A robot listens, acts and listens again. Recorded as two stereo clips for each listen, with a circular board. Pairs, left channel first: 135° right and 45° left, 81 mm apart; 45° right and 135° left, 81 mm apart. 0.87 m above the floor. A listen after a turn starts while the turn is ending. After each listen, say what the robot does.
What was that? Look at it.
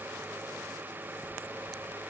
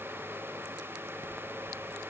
Keep listening.
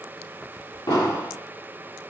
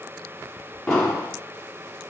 Turn 130° right.
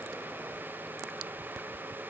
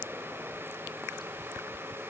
Facing where the explosion came from. I can't hear it now.